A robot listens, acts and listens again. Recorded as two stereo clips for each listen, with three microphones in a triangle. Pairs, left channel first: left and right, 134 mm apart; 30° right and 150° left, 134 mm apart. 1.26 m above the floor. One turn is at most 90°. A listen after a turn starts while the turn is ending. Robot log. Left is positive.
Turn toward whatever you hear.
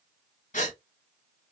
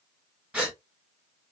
note: The gasp: 70° left.
cmd yaw +70
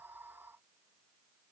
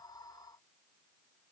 end: I heard a gasp from this way, but can't make it out now.